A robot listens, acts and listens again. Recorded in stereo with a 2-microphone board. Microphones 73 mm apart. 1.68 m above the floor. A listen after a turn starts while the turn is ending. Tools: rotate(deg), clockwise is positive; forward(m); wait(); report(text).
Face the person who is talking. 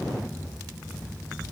wait()
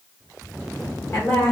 rotate(-35)
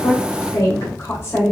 rotate(-130)
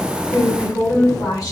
rotate(-45)
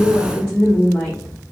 rotate(-10)
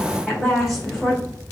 report("Facing the woman speaking.")